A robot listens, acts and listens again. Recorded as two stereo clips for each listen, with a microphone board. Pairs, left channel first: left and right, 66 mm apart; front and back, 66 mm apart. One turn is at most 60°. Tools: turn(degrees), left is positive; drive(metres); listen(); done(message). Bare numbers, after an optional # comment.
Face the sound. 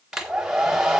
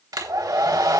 # The hair dryer: 170° right.
turn(-60)
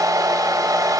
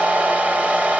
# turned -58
# The hair dryer is now 110° right.
turn(-60)
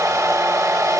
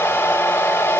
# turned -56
# The hair dryer is now 55° right.
turn(-55)
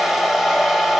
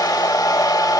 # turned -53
done("Found it: a hair dryer, straight ahead.")